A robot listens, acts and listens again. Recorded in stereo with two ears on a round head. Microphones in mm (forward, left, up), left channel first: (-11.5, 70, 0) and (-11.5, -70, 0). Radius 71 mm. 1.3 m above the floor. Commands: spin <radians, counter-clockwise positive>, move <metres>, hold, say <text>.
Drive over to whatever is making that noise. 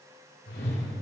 spin 1.22
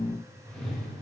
move 1.0
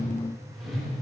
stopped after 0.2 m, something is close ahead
say Blocked. The whoosh is further on, straight ahead.